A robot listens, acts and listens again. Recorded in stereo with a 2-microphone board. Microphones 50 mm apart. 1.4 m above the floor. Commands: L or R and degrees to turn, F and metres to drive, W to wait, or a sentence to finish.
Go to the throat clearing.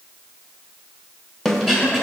L30
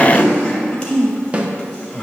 L145
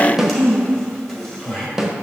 F1.0
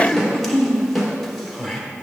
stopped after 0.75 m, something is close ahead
I am next to the throat clearing.